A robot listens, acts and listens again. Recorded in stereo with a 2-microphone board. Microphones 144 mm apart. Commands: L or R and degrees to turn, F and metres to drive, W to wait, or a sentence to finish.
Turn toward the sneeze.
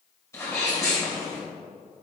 L20
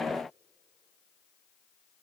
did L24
W
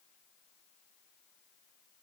I heard a sneeze, but can't make it out now. It was about 5° right or 135° left.